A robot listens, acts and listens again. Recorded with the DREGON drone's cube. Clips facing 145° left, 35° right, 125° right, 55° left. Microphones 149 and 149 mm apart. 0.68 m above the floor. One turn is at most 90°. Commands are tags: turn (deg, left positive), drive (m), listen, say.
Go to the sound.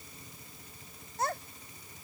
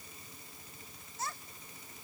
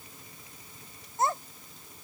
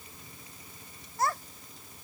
<turn deg="90"/>
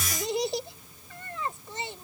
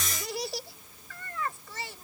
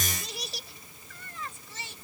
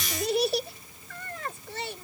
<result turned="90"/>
<turn deg="80"/>
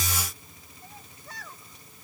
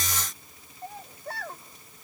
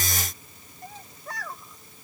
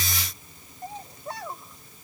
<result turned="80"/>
<turn deg="-10"/>
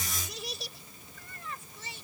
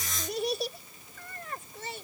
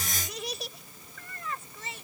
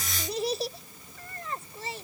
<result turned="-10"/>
<drive m="1.0"/>
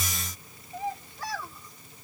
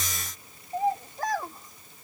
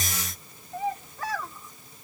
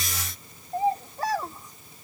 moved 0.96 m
<drive m="1.0"/>
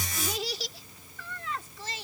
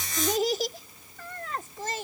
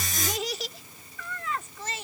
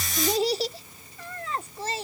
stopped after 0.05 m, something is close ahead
<say>I am next to the child speaking.</say>